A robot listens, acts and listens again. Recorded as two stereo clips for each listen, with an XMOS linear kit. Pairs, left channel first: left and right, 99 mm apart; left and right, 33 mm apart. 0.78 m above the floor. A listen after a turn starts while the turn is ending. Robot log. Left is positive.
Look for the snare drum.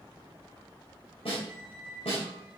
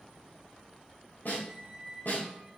note: The snare drum: about 70° left or 110° left.
cmd yaw +70
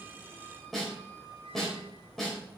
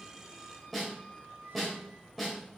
end: Found it: a snare drum, straight ahead, 2 to 4 m away.